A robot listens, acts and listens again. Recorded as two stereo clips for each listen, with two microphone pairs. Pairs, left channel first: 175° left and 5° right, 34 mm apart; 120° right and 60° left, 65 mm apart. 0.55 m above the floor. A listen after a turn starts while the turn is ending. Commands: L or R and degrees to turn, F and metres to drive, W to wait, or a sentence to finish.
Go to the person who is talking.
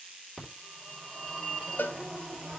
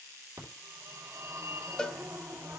W
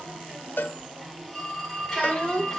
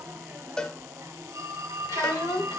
R135
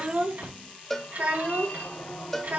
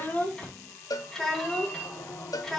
R35
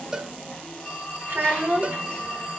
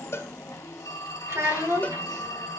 L15
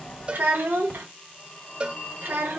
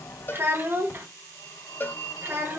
F1.0
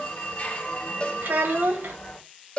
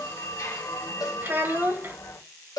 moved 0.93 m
F1.0
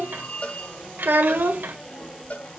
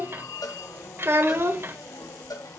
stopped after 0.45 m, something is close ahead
L10
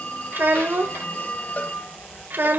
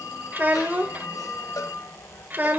I am next to the child speaking.